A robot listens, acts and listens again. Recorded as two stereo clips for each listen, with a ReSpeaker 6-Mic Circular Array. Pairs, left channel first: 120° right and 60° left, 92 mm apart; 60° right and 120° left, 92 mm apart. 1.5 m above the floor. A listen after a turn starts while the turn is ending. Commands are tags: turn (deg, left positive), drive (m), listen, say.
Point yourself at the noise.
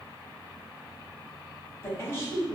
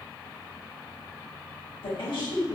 <turn deg="-60"/>
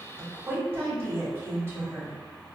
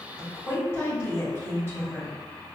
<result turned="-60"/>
<say>Found it: a woman speaking, straight ahead, 1 to 2 m away.</say>